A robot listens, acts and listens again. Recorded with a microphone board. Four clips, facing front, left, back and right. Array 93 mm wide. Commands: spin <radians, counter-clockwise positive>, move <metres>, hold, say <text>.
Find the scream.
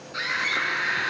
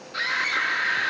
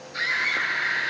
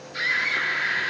spin 0.87
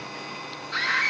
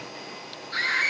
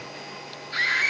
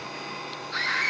spin -0.35
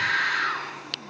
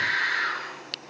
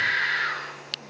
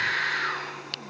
say Found it: a scream, straight ahead, over 4 m away.